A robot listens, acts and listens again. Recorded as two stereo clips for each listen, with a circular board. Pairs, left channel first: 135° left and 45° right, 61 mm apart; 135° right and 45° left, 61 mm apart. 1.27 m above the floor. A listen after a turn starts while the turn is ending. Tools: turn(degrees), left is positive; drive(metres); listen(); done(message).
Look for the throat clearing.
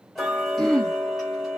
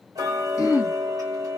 turn(degrees=-140)
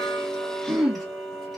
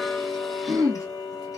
turn(degrees=35)
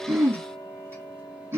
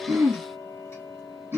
done("Facing the throat clearing.")